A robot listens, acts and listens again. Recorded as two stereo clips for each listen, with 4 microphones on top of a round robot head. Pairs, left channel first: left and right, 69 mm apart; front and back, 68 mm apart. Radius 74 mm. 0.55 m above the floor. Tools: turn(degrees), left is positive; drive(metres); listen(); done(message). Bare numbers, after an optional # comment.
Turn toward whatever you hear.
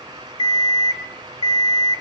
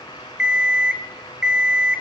# The alarm clock: 100° left.
turn(100)
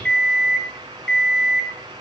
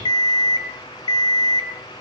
# The alarm clock is now 10° left.
turn(10)
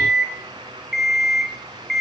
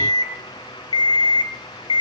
done("Found it: an alarm clock, straight ahead.")